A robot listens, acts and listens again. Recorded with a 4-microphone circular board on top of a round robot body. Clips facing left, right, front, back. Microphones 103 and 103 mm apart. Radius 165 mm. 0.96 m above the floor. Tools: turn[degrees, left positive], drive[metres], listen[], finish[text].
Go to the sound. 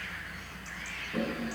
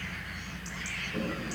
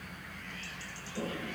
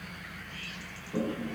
Thought: The toilet flushing: 165° left.
Action: turn[165]
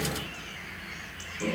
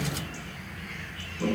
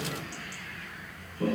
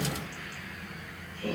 Thought: The toilet flushing is now 10° right.
Action: turn[-10]
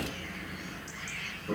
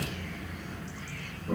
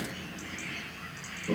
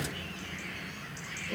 Action: drive[1.0]
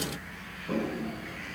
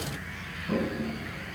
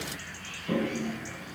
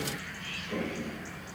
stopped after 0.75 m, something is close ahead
Action: finish[Something is in my way. I am facing the toilet flushing but have not reached it.]